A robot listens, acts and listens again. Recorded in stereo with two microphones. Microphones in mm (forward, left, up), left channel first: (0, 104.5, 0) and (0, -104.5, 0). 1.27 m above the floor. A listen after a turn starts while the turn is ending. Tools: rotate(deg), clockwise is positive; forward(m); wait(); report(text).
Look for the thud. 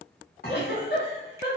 rotate(-45)
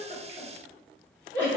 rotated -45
wait()
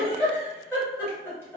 report("I heard a thud, but can't make it out now. It was about straight ahead or 90° left.")